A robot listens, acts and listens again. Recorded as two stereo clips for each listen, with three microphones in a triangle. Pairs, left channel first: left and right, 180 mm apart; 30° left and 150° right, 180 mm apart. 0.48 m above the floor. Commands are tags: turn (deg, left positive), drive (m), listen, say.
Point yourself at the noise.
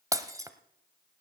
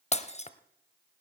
<turn deg="-20"/>
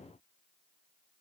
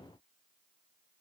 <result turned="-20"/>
<say>Facing where the breaking glass came from. I can't hear it now.</say>